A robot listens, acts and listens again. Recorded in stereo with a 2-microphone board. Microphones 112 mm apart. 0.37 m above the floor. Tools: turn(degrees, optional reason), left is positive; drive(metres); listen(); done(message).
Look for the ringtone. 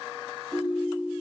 turn(degrees=-30, reason="The ringtone: about 30° right or 150° right.")
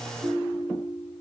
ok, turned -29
turn(degrees=-125, reason="So it is at 125° right.")
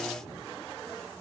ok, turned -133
turn(degrees=10, reason="Nothing new. It was at 10° left.")
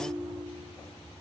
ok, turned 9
done("Found it: a ringtone, straight ahead.")